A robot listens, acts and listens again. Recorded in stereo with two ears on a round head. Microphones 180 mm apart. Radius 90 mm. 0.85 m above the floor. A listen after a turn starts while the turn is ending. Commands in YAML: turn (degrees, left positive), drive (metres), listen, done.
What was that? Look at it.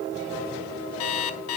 turn: 90
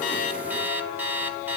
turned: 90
turn: -10
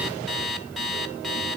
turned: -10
done: "Facing the alarm clock."